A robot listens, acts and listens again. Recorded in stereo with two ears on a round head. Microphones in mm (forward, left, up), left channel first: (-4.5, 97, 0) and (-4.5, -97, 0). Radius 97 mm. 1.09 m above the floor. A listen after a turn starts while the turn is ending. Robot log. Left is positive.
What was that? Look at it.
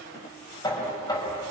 note: The knocking: about 15° left or 165° left.
cmd yaw +15
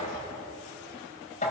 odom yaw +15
note: So it is at 145° left.
cmd yaw +145
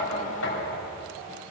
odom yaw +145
note: The knocking is now 50° left.
cmd yaw +50
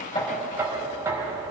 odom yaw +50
note: The knocking is now 10° right.
cmd yaw -10
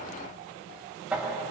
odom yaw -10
end: Found it: knocking, straight ahead, over 4 m away.